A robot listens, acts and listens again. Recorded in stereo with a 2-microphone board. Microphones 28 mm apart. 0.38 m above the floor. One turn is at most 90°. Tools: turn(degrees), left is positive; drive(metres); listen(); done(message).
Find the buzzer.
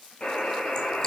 turn(degrees=50)
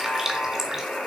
turn(degrees=80)
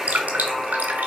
done("Found it: a buzzer, straight ahead.")